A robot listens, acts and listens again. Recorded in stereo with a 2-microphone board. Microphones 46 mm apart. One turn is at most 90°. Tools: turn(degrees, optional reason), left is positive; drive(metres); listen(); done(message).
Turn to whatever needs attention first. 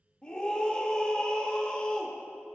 turn(degrees=25, reason="The scream: about 25° left or 155° left.")
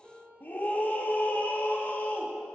turn(degrees=90, reason="So it is at 130° left.")
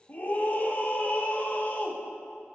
turn(degrees=45, reason="The scream is now 45° left.")
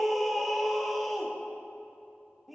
done("Found it: a scream, straight ahead.")